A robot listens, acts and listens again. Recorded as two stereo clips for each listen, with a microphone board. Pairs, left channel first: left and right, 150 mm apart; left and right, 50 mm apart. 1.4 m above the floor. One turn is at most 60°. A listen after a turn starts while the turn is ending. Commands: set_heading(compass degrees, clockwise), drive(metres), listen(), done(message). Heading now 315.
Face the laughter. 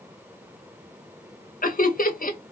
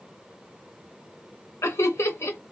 set_heading(255)
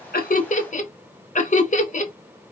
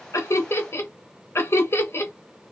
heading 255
set_heading(205)
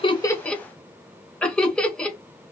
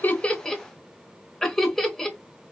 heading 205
done("Facing the laughter, 1 to 2 m away.")